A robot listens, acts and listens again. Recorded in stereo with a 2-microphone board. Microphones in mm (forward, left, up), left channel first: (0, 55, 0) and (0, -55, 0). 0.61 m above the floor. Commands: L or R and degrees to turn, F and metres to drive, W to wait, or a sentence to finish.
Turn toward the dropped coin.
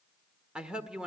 W
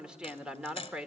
L50
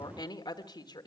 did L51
W
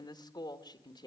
I heard a dropped coin, but can't make it out now. It was about straight ahead or 80° left.